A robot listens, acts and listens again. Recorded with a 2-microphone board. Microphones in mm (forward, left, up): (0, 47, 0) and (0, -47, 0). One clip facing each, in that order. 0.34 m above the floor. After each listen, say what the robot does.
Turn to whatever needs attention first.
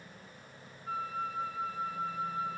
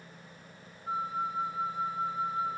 Keep listening.
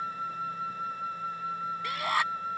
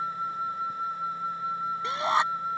Turn 25° right.
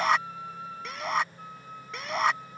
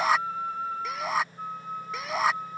Found it: a shout, straight ahead.